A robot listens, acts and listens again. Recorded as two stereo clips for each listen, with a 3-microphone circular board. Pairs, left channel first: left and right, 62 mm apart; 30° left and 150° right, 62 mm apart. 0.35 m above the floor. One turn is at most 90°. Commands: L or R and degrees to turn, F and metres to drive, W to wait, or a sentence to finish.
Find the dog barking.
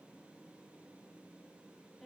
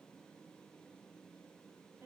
W
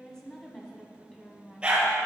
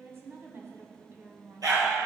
R90
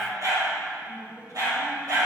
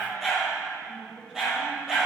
R70
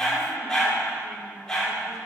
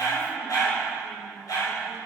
L15
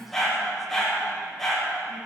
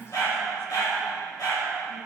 Found it: a dog barking, straight ahead, 2 to 4 m away.